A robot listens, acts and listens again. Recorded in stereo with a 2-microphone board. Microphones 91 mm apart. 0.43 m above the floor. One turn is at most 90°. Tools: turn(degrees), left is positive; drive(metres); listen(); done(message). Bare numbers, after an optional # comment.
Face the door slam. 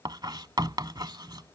listen()
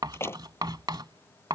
# The door slam: about 25° left or 155° left.
turn(25)
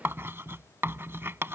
listen()
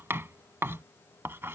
done("I heard a door slam, but can't make it out now. It was about straight ahead or 130° left.")